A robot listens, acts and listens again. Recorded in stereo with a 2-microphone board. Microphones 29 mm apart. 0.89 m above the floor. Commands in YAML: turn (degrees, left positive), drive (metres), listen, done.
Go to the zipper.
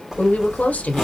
turn: -30
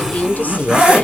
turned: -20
turn: -150
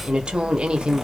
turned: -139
turn: -10
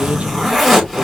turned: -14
drive: 1.0
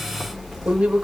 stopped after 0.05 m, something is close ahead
listen: true
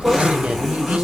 done: "Blocked. The zipper is further on, straight ahead."